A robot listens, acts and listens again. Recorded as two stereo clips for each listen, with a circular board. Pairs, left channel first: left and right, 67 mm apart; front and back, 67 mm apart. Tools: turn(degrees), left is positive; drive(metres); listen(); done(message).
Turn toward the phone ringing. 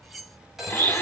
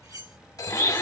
done("Facing the phone ringing.")